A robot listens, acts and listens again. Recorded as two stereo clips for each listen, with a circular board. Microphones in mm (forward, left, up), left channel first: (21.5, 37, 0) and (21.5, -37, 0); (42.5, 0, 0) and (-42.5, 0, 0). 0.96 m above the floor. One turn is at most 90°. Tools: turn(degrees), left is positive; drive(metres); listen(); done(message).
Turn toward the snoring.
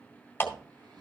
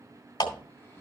turn(degrees=-65)
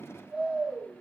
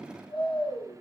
turn(degrees=-15)
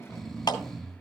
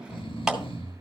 done("Facing the snoring.")